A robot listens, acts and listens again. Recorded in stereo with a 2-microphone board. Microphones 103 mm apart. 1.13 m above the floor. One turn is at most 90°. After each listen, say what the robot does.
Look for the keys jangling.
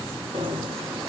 Turn 70° right.
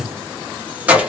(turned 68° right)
Turn 10° right.
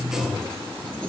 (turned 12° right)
Keep listening.
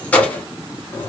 Turn 25° left.
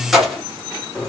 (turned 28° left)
Facing the keys jangling, 2 to 4 m away.